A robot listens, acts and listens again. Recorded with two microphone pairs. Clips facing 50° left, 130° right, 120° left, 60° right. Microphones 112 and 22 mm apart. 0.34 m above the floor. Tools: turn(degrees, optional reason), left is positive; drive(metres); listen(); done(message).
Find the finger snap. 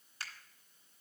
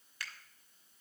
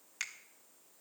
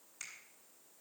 turn(degrees=105, reason="The finger snap: 105° left.")
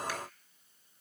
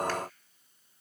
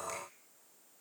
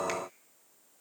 listen()
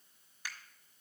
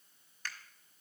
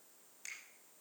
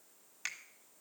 turn(degrees=-25, reason="The finger snap is now 25° right.")
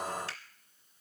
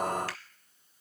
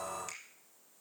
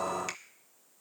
listen()
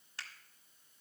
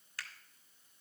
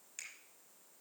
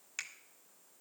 turn(degrees=-10, reason="The finger snap is now 10° right.")
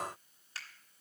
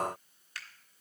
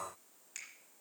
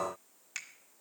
done("Found it: a finger snap, straight ahead.")